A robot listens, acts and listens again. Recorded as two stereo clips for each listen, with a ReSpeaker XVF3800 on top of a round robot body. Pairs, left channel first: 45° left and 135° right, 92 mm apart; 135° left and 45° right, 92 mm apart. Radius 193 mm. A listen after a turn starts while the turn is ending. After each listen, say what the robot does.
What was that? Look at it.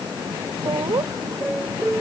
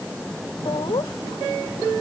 Turn 170° left.
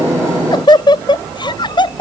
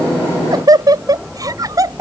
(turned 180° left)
Turn 10° left.
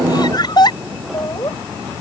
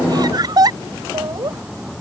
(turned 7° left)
Found it: laughter, straight ahead.